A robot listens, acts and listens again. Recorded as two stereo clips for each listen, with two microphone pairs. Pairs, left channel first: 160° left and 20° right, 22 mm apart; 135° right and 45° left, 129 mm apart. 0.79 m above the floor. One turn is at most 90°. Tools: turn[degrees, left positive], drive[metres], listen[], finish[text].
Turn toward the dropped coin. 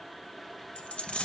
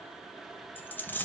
Thought: The dropped coin: 155° left.
Action: turn[90]
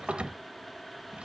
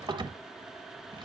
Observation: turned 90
Thought: Nothing new. It was at 65° left.
Action: turn[65]
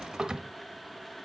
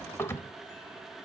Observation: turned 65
Action: finish[Facing where the dropped coin came from. I can't hear it now.]